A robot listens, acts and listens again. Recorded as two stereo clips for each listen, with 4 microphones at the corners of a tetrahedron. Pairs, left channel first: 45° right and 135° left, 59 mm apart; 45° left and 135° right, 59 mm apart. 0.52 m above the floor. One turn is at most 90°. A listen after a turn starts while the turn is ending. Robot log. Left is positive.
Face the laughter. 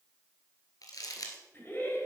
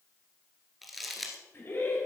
end: Found it: laughter, straight ahead, 2 to 4 m away.